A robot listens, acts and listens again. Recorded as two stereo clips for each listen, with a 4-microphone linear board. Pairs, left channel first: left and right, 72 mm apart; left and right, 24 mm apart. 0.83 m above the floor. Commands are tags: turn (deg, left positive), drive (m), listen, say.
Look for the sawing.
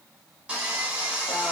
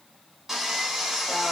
<turn deg="-30"/>
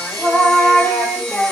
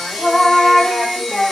<turn deg="15"/>
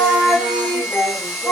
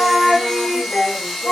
<say>Facing the sawing, 1 to 2 m away.</say>